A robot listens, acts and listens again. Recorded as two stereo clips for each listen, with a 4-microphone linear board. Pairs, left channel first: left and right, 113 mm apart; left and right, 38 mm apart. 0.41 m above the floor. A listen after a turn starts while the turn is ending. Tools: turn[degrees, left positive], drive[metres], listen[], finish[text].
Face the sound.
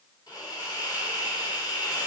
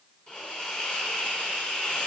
Thought: The hiss: about 35° left or 145° left.
Action: turn[35]
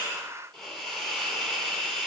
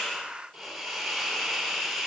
Action: finish[Facing the hiss, 2 to 4 m away.]